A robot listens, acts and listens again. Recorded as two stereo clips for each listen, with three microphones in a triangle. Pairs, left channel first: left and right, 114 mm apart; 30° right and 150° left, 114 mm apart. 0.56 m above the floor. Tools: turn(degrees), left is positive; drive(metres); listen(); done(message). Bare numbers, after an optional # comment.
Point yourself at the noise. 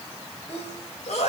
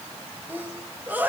# The sneeze: 75° left.
turn(75)
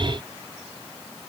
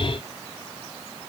done("I heard a sneeze from this way, but can't make it out now.")